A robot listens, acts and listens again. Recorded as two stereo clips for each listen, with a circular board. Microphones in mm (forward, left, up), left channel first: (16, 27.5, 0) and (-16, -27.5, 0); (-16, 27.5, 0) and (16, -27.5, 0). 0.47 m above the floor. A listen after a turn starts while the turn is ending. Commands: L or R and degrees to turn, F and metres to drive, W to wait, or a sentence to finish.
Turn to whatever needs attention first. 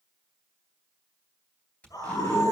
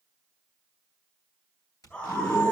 L55
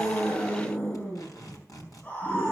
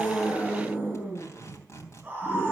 Facing the scream.